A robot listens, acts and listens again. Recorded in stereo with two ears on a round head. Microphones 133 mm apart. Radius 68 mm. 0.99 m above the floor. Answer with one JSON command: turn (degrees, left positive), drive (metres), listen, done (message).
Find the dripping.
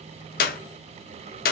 {"listen": true}
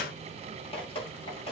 {"turn": 40}
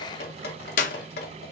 {"turn": 100}
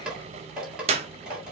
{"done": "Facing the dripping, 2 to 4 m away."}